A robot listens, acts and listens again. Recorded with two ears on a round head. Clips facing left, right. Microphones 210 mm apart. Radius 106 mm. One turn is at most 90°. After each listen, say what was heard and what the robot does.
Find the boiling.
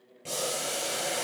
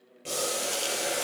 The boiling: about 20° right or 160° right. Turn 20° right.
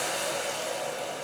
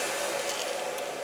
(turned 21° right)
Facing the boiling.